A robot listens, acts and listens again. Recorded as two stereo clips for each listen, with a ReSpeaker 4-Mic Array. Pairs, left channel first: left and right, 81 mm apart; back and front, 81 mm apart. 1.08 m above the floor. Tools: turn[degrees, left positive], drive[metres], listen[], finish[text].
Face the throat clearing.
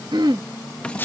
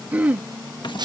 Thought: The throat clearing: 70° right.
Action: turn[-70]
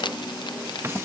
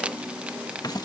Action: listen[]
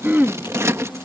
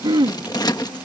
Thought: The throat clearing is now 20° right.
Action: turn[-20]
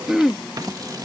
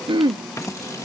Action: finish[Facing the throat clearing.]